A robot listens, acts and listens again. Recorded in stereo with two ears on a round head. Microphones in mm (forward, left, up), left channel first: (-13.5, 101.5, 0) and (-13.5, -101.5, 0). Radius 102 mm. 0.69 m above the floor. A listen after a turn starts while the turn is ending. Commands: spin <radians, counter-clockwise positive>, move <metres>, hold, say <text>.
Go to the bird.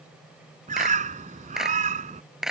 spin -0.61
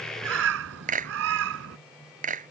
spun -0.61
spin -1.92
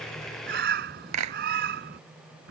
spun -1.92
spin -0.79
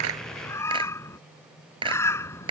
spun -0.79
spin 0.17
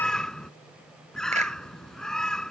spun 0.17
move 1.0
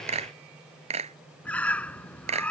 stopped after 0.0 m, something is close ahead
say Blocked. The bird is further on, straight ahead.